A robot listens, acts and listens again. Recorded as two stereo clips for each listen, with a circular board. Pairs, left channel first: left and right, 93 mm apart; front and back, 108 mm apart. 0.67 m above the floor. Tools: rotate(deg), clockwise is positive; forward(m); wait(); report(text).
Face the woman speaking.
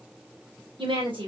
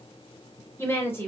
rotate(70)
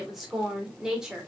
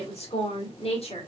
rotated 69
rotate(10)
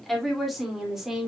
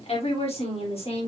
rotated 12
report("Found it: a woman speaking, straight ahead, 2 to 4 m away.")